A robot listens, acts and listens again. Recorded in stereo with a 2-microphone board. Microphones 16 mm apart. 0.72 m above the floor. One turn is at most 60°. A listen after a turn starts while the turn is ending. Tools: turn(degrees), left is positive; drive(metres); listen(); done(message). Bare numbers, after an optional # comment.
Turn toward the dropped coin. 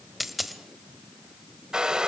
turn(-30)
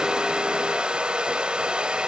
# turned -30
listen()
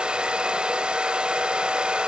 done("I heard a dropped coin, but can't make it out now. It was about 25° left or 145° right.")